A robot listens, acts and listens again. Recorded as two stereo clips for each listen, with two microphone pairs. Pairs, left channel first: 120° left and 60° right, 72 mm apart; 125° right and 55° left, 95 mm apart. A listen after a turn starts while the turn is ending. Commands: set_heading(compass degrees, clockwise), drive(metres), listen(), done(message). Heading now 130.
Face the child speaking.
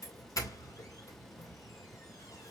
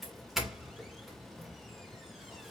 listen()
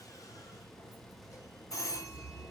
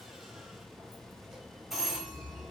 listen()
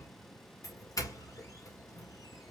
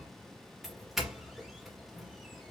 done("I can't make out a child speaking, only a doorbell.")